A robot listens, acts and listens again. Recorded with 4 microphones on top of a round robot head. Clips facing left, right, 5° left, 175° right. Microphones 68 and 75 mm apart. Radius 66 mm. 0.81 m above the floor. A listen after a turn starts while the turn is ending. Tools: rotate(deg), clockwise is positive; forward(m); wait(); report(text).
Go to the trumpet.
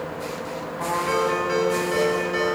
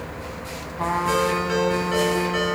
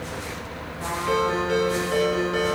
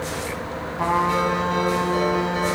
rotate(165)
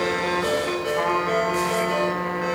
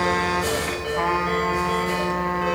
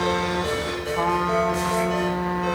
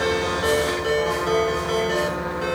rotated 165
forward(1.0)
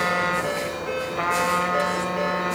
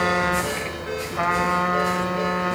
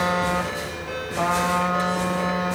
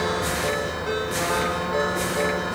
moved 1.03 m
rotate(10)
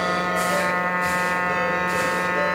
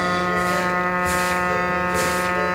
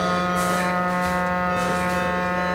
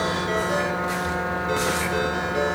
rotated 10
forward(1.0)
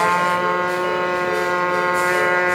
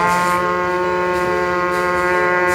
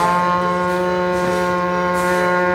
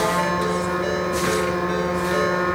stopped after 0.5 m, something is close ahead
report("Arrived at the trumpet, straight ahead.")